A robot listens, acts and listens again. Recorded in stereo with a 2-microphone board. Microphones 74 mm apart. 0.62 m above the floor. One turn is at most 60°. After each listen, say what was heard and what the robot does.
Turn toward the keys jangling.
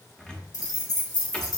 The keys jangling: about 75° left or 105° left. Turn 60° left.
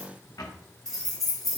Found it: keys jangling, straight ahead, 2 to 4 m away.